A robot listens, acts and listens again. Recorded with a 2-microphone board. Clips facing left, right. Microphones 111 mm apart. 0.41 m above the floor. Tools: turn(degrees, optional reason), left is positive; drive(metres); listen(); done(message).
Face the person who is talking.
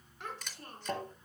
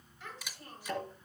turn(degrees=70, reason="The child speaking: about 70° left or 110° left.")
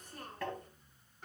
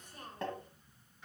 turn(degrees=40, reason="So it is at 40° left.")
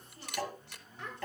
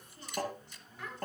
turn(degrees=25, reason="The child speaking is now 25° left.")
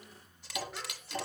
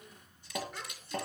listen()
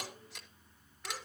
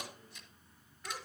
listen()
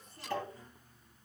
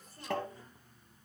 done("Facing where the child speaking came from. I can't hear it now.")